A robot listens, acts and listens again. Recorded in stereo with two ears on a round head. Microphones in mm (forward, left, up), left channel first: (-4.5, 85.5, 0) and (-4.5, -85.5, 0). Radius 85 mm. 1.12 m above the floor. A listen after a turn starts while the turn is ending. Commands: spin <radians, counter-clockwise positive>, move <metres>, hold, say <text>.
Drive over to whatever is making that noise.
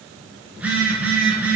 spin -0.52
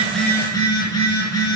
spin 0.35
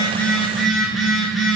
move 1.0
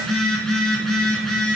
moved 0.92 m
move 1.0
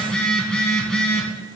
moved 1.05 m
move 1.0
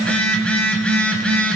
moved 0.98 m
move 1.0
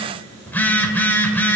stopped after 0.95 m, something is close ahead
spin 0.26
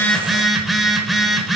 say I am next to the phone buzzing.